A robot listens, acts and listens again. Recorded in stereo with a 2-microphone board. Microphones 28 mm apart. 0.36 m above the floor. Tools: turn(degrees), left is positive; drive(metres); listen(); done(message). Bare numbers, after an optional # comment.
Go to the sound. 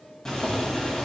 # The boiling: about 20° left or 160° left.
turn(20)
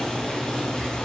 # So it is at 140° left.
turn(140)
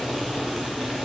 drive(1.0)
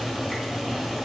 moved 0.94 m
drive(1.0)
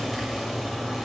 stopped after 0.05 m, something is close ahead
done("Arrived at the boiling, straight ahead.")